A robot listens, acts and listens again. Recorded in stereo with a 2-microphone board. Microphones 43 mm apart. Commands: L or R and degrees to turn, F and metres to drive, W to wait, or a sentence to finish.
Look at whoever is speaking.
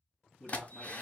L30
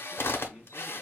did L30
R20
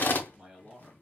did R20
Facing the man speaking, 2 to 4 m away.